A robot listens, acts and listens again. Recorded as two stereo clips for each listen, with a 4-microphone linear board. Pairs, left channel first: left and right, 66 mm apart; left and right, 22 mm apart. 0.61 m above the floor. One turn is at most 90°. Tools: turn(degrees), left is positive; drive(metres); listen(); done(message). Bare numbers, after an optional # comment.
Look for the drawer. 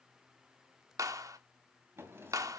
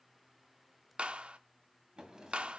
# The drawer: about 35° right or 145° right.
turn(-35)
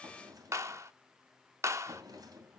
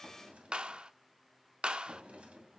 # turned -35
# So it is at 110° right.
turn(-90)
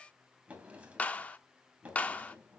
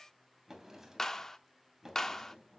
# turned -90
# The drawer is now 20° right.
turn(-20)
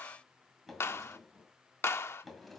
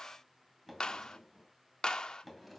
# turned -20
done("Facing the drawer.")